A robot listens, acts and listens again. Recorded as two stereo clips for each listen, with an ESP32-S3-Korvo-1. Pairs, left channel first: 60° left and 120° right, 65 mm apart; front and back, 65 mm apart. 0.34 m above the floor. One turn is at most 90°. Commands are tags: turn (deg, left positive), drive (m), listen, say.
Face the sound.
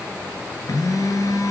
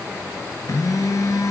<turn deg="30"/>
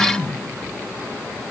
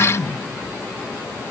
<say>Facing the phone buzzing, 2 to 4 m away.</say>